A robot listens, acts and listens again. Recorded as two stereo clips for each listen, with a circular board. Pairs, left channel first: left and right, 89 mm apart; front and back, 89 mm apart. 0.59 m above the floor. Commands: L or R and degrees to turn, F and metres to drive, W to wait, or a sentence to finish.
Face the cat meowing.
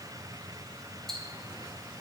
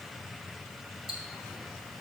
W
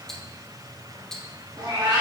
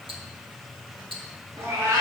R125
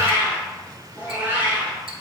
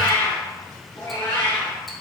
R20
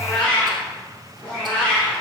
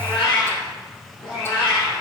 Facing the cat meowing, 2 to 4 m away.